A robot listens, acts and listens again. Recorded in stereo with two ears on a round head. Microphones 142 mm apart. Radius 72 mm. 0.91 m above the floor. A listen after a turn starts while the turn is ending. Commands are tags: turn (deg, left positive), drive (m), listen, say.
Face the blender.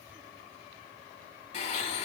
<turn deg="45"/>
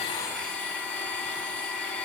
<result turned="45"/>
<say>Found it: a blender, straight ahead, 1 to 2 m away.</say>